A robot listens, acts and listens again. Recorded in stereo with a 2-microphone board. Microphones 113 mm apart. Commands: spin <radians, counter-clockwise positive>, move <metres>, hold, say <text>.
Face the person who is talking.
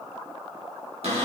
hold
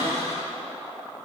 hold
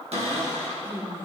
spin -0.35
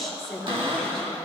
say Found it: a woman speaking, straight ahead, 2 to 4 m away.